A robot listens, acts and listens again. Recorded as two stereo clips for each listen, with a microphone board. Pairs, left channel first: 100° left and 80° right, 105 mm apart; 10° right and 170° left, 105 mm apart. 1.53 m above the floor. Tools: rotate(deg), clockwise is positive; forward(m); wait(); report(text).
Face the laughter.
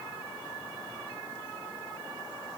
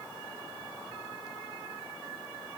wait()
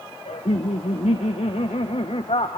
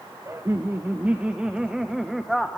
rotate(-80)
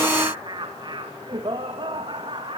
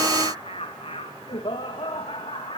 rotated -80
rotate(45)
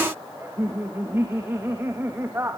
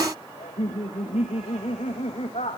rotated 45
rotate(10)
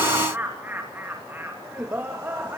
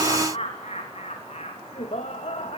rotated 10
rotate(10)
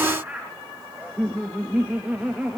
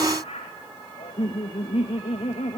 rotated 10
report("Found it: laughter, straight ahead.")